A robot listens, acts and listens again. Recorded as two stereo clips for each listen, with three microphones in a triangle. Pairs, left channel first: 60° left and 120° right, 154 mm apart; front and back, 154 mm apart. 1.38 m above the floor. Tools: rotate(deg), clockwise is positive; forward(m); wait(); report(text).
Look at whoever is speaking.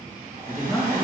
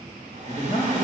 rotate(25)
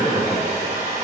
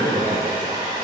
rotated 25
rotate(15)
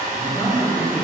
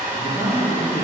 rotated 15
rotate(10)
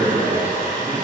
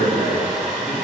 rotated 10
report("Found it: a man speaking, straight ahead, over 4 m away.")